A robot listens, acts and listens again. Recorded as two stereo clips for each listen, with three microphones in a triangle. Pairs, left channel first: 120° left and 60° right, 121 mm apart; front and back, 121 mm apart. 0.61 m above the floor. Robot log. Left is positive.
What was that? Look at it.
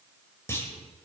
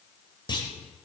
note: The clunk: 50° left.
cmd yaw +50
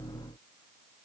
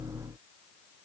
end: Facing where the clunk came from. I can't hear it now.